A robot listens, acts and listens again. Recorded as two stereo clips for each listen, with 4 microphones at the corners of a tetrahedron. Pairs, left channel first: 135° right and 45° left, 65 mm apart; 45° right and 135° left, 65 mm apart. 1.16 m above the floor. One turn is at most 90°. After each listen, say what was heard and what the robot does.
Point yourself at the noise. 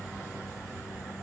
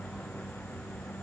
Keep listening.
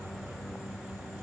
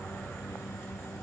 Keep listening.
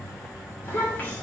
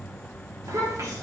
The child speaking: 165° left. Turn 90° left.
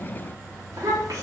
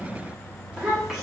The child speaking is now 50° left. Turn 50° left.
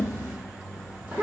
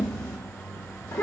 Facing the child speaking, 1 to 2 m away.